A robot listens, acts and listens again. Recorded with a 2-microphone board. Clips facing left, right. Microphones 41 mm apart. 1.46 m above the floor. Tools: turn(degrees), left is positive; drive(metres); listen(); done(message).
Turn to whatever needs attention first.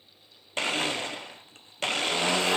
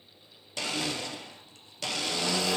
listen()
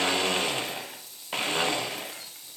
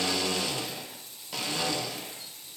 listen()
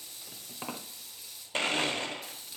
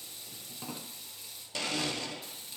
done("I can't make out anything urgent, only a blender and frying.")